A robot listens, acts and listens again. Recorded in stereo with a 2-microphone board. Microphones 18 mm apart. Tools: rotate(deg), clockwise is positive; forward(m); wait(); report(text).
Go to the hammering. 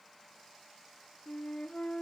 wait()
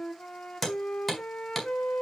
rotate(-30)
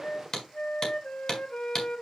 rotate(-140)
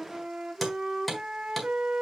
forward(1.0)
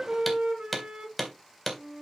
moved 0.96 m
forward(1.0)
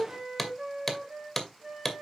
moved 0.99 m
rotate(-10)
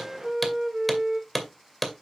forward(1.0)
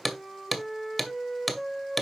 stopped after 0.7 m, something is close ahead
report("Arrived at the hammering, straight ahead.")